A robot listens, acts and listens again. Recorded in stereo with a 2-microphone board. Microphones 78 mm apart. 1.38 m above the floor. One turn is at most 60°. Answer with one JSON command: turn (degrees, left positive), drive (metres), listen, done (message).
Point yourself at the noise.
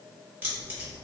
{"turn": -25}
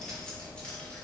{"turn": 15}
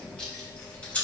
{"turn": 20}
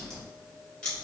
{"turn": 15}
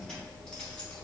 {"turn": 10}
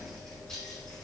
{"turn": 10}
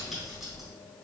{"done": "Found it: keys jangling, straight ahead."}